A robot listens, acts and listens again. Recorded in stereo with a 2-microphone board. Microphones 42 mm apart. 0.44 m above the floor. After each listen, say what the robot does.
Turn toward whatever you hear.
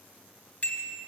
Turn 35° left.
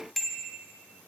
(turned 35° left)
Found it: a bicycle bell, straight ahead, 2 to 4 m away.